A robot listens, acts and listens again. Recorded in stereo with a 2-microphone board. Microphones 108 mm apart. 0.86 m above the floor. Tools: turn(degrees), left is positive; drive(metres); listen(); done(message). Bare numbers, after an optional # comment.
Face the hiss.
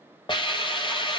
# The hiss: about 50° left or 130° left.
turn(50)
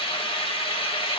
# So it is at 70° left.
turn(70)
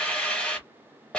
# The hiss is now 10° left.
turn(10)
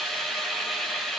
done("Found it: a hiss, straight ahead, 1 to 2 m away.")